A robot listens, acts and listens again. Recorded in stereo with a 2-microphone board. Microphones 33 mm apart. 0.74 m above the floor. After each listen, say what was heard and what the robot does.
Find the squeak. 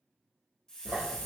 The squeak: about 65° right or 115° right. Turn 65° right.
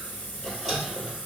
Facing the squeak.